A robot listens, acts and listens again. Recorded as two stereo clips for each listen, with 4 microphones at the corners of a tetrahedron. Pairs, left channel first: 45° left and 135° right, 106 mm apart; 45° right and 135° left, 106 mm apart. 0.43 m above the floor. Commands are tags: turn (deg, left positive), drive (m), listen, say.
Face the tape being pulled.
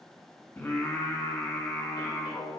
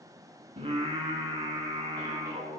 <listen/>
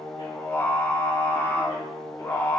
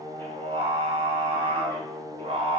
<listen/>
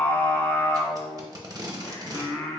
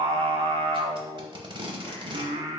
<turn deg="170"/>
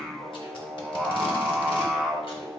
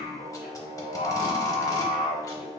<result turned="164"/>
<listen/>
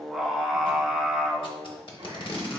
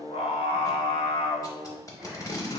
<turn deg="10"/>
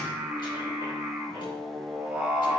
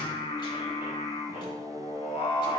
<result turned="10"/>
<listen/>
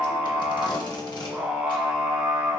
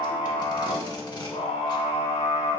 <listen/>
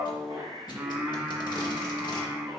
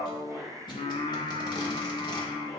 <say>I heard tape being pulled from this way, but can't make it out now.</say>